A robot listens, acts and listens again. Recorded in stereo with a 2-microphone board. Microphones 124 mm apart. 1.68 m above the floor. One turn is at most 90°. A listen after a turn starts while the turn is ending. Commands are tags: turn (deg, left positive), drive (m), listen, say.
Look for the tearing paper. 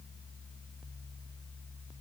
<listen/>
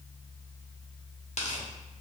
<turn deg="60"/>
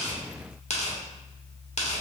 <turn deg="60"/>
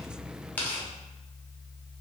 <turn deg="15"/>
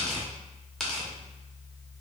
<say>Facing the tearing paper, under 1 m away.</say>